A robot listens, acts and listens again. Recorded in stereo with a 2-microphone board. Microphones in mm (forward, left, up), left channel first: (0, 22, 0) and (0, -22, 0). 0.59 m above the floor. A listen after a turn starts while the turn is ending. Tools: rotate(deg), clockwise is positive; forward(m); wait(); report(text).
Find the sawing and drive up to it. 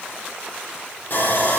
rotate(-50)
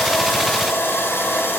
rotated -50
rotate(-80)
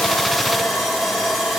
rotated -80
forward(1.0)
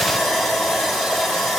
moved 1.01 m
forward(1.0)
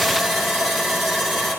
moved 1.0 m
forward(1.0)
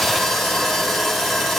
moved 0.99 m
forward(1.0)
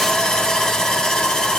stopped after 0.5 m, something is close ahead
rotate(-15)
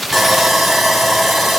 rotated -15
report("I am next to the sawing.")